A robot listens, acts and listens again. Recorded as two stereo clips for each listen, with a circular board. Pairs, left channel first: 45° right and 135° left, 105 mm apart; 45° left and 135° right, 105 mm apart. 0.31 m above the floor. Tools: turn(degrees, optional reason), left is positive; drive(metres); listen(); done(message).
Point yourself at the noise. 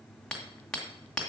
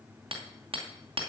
turn(degrees=-125, reason="The hammering: 125° right.")
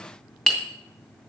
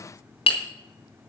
turn(degrees=40, reason="The hammering is now 40° left.")
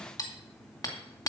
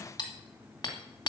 done("Found it: hammering, straight ahead.")